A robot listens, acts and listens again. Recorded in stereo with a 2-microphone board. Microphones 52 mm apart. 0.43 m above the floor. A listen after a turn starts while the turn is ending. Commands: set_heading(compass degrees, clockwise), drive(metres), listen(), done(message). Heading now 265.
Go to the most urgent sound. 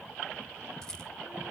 listen()
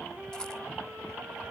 listen()
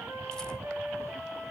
done("I can't make out anything urgent to turn to.")